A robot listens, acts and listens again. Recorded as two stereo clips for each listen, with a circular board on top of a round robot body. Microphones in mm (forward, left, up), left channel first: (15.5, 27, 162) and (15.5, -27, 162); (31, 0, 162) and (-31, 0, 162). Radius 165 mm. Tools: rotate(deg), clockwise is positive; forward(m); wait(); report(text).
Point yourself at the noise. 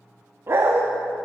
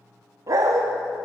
rotate(140)
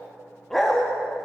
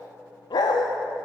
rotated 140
report("Facing the dog barking, under 1 m away.")